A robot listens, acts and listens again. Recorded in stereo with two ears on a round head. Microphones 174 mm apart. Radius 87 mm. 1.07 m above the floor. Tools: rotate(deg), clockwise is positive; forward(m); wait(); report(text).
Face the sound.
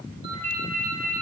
rotate(30)
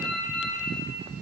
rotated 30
report("Facing the ringtone.")